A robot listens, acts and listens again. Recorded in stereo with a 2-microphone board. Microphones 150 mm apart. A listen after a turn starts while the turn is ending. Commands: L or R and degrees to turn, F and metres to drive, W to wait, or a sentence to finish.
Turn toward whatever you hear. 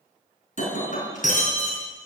L55
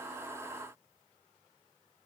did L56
W
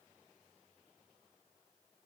I heard breaking glass, but can't make it out now. It was about straight ahead or 70° left.